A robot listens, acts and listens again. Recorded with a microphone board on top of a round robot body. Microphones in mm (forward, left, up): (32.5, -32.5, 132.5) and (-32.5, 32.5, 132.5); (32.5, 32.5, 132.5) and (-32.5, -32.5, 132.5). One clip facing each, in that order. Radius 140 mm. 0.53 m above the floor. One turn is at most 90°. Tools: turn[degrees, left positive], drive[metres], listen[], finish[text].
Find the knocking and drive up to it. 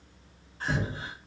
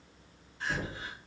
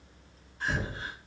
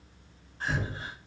Thought: The knocking: 40° right.
Action: turn[-40]
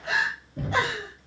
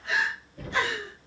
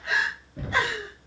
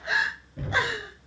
Thought: The knocking is now 25° right.
Action: turn[-25]
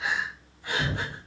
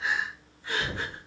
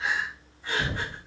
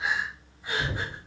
Thought: The knocking is now 10° right.
Action: turn[-10]
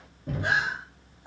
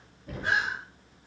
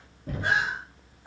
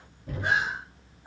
Action: drive[1.0]
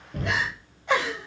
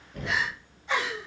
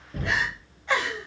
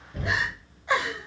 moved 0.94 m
Action: drive[1.0]
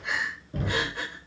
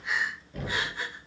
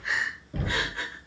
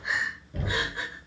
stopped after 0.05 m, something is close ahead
Action: finish[Blocked. The knocking is further on, straight ahead.]